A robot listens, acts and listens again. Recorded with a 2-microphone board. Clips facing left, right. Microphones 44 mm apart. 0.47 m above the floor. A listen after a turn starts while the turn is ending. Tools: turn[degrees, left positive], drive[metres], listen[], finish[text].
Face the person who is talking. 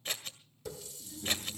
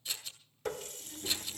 Thought: The child speaking: about 20° right or 160° right.
Action: turn[-20]
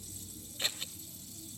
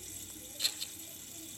Thought: So it is at 145° right.
Action: turn[-145]
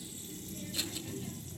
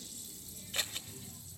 Thought: The child speaking is now 15° left.
Action: turn[15]
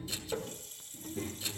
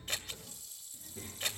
Action: finish[Found it: a child speaking, straight ahead, over 4 m away.]